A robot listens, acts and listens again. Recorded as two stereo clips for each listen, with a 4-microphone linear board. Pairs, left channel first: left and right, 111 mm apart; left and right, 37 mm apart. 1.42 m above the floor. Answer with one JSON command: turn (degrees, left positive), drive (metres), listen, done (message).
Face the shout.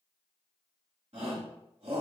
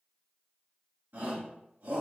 {"turn": -70}
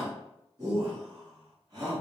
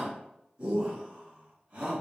{"turn": -40}
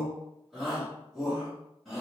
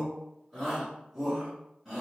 {"done": "Facing the shout."}